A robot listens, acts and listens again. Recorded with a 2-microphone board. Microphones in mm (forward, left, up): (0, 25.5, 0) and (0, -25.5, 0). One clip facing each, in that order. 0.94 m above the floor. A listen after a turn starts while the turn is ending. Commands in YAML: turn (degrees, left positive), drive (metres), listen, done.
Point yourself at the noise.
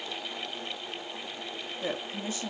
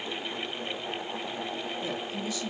turn: 40
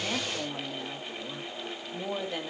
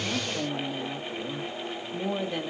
done: "Found it: a woman speaking, straight ahead."